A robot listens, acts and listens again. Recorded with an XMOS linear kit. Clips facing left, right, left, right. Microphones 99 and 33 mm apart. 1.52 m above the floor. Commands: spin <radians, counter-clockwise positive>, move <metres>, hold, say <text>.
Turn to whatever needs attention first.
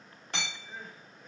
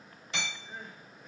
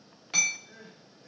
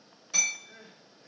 spin 0.52
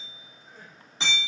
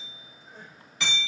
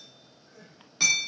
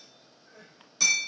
spin -0.52
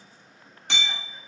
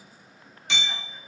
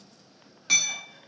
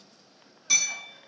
hold
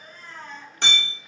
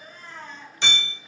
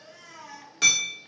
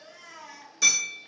say Facing the crying.